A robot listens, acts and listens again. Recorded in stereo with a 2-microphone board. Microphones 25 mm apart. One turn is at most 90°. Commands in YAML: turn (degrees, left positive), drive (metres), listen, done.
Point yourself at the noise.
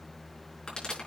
turn: 40
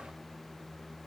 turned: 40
listen: true
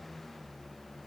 done: "I heard a pop, but can't make it out now. It was about straight ahead or 100° left."